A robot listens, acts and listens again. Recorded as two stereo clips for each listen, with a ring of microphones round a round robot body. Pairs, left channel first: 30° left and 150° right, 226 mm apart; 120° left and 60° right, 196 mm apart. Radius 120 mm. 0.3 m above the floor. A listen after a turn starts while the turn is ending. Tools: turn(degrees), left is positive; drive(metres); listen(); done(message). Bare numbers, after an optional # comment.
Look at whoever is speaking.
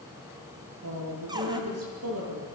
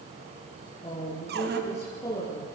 # The woman speaking: 165° right.
turn(-165)
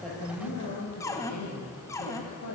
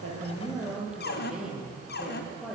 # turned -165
# The woman speaking is now 25° left.
turn(25)
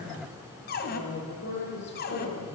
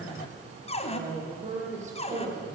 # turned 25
# The woman speaking is now 10° right.
turn(-10)
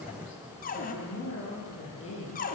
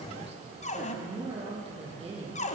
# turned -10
done("Found it: a woman speaking, straight ahead.")